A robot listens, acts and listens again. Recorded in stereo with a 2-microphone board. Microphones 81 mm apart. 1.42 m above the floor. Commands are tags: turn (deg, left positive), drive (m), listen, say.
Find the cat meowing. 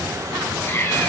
<turn deg="30"/>
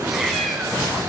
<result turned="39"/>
<say>Facing the cat meowing, over 4 m away.</say>